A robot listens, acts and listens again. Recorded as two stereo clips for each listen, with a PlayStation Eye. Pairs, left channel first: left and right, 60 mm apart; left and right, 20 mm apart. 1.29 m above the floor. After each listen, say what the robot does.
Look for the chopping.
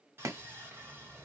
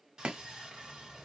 Turn 60° right.
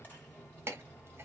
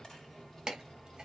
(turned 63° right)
Turn 45° right.
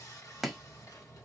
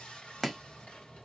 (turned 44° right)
Facing the chopping.